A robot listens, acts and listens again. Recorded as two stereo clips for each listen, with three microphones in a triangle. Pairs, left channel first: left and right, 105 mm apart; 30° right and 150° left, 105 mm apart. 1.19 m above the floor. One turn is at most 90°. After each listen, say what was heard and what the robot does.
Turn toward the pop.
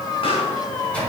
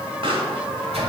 The pop: 120° left. Turn 90° left.
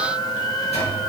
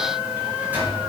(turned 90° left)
Nothing new. It was at 30° left. Turn 30° left.
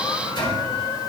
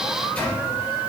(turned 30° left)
Facing where the pop came from. I can't hear it now.